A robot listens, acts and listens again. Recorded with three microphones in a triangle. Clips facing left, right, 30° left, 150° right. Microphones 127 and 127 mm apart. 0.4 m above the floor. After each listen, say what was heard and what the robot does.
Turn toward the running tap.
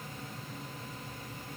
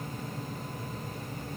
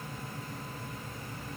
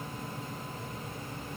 Keep listening.
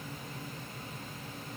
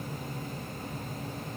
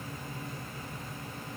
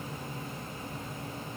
Keep listening.
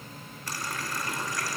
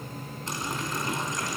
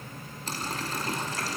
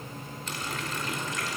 The running tap: 25° right. Turn 25° right.
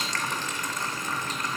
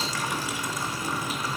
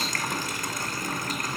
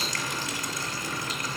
The running tap is now 10° right. Turn 10° right.
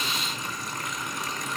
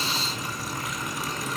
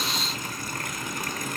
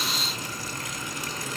Found it: a running tap, straight ahead, 2 to 4 m away.